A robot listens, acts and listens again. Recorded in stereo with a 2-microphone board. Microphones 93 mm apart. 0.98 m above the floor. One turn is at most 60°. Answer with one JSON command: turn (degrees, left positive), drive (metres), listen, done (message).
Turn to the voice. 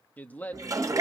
{"turn": 15}
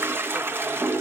{"listen": true}
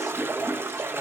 {"listen": true}
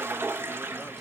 {"done": "I heard a man speaking, but can't make it out now. It was about straight ahead or 150° left."}